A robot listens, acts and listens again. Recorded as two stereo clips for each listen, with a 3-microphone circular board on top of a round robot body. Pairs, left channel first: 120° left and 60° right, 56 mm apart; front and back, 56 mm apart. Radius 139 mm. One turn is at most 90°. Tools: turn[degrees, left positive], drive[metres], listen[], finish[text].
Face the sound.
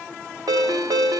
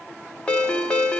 Thought: The ringtone: 70° right.
Action: turn[-70]
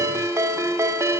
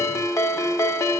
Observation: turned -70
Thought: The ringtone is now 25° right.
Action: turn[-25]
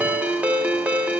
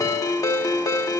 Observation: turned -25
Action: finish[Facing the ringtone, 1 to 2 m away.]